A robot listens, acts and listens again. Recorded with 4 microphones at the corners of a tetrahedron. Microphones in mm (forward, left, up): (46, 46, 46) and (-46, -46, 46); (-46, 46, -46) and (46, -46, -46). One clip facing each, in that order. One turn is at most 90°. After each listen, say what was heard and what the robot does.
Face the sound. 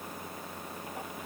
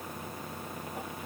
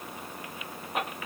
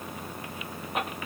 Keep listening.
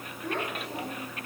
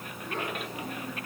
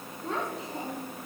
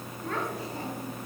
The child speaking: 65° left. Turn 65° left.
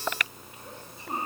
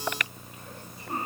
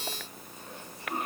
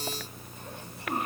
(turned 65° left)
The child speaking is now 25° right. Turn 25° right.
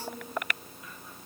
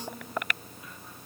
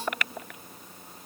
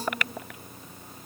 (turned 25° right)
The child speaking is now 30° right. Turn 30° right.
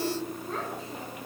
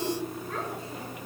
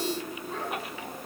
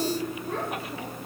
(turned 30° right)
The child speaking is now 20° right. Turn 20° right.
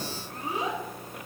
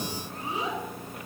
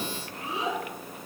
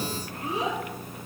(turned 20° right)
Facing the child speaking.